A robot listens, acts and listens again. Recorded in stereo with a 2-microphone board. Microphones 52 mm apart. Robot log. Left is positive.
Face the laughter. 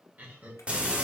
note: The laughter: about 35° right or 145° right.
cmd yaw -35
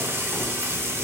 cmd idle
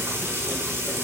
cmd idle
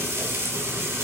end: I heard laughter, but can't make it out now. It was about straight ahead or 110° right.